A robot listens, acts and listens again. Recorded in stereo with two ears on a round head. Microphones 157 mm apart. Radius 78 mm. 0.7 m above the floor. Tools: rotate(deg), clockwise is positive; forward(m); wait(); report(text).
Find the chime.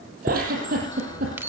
rotate(30)
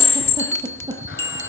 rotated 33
rotate(-20)
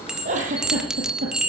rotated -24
report("Found it: a chime, straight ahead, 1 to 2 m away.")